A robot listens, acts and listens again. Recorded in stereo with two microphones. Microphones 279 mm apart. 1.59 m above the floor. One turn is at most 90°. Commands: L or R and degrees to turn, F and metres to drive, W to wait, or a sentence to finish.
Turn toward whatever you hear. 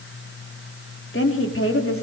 L50
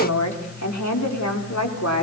L65
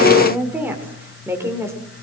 R10
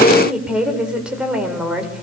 Found it: a woman speaking, straight ahead, over 4 m away.